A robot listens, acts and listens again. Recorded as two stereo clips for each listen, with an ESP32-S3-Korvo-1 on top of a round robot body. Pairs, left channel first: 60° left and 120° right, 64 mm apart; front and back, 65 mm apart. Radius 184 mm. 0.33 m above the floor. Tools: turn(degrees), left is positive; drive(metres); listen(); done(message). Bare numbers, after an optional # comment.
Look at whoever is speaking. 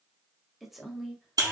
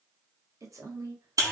# The woman speaking: 150° left.
turn(150)
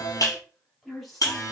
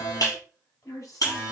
# The woman speaking is now 30° right.
turn(-30)
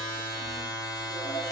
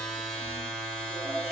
listen()
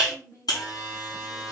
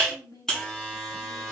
# The woman speaking is now 25° left.
turn(25)
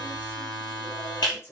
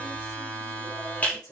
# The woman speaking is now 10° left.
turn(10)
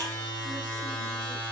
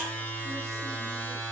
listen()
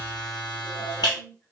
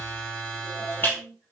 done("Facing the woman speaking.")